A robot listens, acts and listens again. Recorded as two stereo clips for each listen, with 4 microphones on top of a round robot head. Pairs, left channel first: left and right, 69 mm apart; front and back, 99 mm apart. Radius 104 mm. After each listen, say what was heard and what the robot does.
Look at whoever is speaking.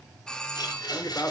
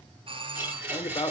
The man speaking: 35° left. Turn 35° left.
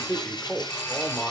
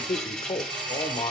The man speaking is now 15° left. Turn 15° left.
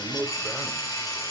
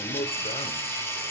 Facing the man speaking.